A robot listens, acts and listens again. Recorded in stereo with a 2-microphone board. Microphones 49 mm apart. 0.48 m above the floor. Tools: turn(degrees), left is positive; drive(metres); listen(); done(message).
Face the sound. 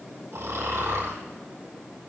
turn(degrees=-65)
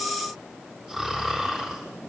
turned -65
done("Facing the snoring.")